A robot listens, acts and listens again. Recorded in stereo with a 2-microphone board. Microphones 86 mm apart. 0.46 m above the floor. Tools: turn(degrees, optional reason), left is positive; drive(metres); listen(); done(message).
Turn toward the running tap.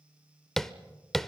listen()
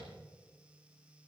listen()
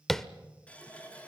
turn(degrees=30)
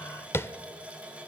turn(degrees=-15, reason="So it is at 15° right.")
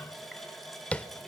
done("Facing the running tap.")